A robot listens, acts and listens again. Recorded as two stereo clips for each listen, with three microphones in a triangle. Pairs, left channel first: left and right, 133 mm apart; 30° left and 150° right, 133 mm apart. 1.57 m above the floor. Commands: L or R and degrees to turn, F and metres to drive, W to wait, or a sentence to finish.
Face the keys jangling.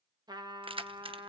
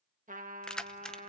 R55
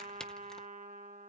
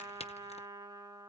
Facing the keys jangling.